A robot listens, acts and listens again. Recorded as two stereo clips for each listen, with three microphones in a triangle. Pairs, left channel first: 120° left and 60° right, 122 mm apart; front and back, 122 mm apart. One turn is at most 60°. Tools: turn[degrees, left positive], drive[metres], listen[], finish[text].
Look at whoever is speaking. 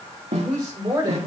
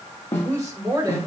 Thought: The woman speaking: 115° right.
Action: turn[-60]
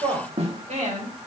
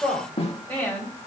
Thought: The woman speaking is now 70° right.
Action: turn[-60]
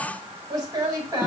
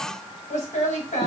Action: finish[Found it: a woman speaking, straight ahead, over 4 m away.]